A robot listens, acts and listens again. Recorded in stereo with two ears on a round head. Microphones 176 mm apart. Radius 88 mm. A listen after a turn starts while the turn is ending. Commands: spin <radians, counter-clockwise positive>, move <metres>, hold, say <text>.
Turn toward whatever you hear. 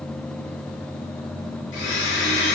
spin 1.57
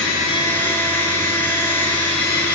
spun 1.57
spin 0.17
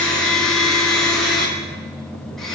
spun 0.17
say Facing the blender.